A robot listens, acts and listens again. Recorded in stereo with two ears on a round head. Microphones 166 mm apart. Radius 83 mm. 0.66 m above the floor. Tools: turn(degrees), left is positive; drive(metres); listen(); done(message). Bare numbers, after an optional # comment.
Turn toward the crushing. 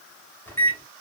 listen()
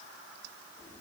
listen()
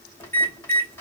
done("I can't make out crushing, only a microwave.")